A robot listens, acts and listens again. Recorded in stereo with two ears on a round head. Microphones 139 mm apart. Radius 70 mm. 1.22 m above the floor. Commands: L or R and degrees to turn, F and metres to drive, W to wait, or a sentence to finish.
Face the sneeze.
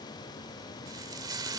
W
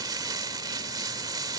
W
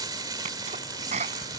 R40
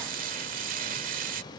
W
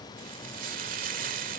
I heard a sneeze, but can't make it out now. It was about straight ahead or 100° right.